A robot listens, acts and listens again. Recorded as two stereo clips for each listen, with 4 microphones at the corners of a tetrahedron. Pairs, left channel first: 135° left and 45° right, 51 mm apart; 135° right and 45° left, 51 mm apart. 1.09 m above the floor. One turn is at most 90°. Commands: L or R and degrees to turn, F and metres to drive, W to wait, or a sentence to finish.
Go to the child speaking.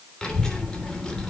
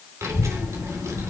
L55
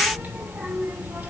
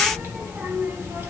F1.0
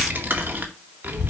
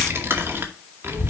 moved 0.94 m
F1.0
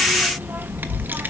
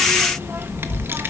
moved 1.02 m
F1.0
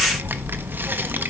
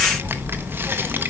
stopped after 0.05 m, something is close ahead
I am next to the child speaking.